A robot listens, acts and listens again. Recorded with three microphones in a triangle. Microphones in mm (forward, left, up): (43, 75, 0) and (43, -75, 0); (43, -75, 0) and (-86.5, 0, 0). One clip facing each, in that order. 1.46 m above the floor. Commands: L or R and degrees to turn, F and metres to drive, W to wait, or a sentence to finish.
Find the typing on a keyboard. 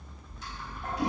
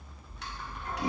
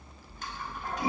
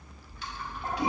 R75
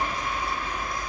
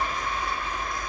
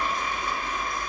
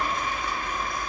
W
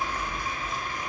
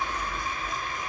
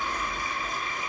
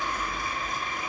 Found it: typing on a keyboard, straight ahead.